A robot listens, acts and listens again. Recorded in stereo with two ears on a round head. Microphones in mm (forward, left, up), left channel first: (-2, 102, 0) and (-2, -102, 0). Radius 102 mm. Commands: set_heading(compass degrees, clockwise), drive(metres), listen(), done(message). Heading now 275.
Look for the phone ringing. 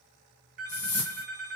set_heading(310)
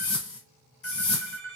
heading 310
set_heading(50)
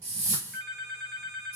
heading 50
done("Found it: a phone ringing, straight ahead, 1 to 2 m away.")